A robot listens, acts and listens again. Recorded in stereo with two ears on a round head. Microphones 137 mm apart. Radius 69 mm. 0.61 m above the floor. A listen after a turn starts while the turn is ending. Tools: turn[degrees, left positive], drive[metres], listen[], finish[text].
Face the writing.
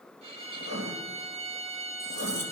Action: turn[-90]
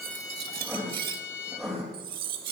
Action: finish[Facing the writing.]